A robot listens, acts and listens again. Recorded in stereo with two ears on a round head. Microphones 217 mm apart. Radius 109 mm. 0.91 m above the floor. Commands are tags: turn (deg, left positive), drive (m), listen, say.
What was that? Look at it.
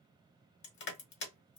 <turn deg="45"/>
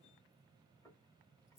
<listen/>
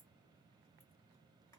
<listen/>
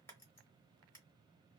<say>I heard crushing, but can't make it out now. It was about straight ahead or 90° left.</say>